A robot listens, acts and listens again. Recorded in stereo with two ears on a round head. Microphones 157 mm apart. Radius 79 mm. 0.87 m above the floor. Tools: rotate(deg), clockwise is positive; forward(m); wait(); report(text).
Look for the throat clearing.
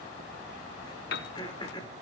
rotate(-25)
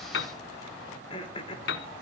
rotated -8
rotate(-30)
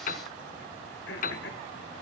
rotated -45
rotate(-105)
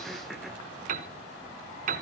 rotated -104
wait()
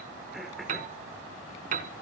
report("Found it: throat clearing, straight ahead, 2 to 4 m away.")